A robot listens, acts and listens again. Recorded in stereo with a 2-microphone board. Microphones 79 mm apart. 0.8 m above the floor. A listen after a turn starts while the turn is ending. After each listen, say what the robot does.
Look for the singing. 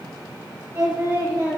Turn 45° right.
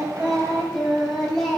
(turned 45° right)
Facing the singing, over 4 m away.